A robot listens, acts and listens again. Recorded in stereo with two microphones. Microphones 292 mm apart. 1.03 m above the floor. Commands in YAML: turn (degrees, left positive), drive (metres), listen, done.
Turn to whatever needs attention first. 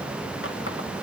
listen: true
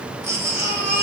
turn: -60
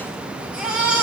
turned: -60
done: "Found it: a baby crying, straight ahead, over 4 m away."